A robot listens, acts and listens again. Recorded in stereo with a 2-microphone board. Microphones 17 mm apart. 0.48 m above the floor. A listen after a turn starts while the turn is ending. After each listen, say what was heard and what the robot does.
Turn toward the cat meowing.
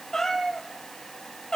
The cat meowing: about 40° left or 140° left. Turn 40° left.
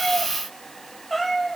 So it is at 10° left. Turn 10° left.
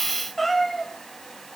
The cat meowing is now 10° left. Turn 10° left.
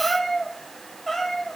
The cat meowing is now 20° left. Turn 20° left.
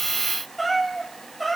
Found it: a cat meowing, straight ahead.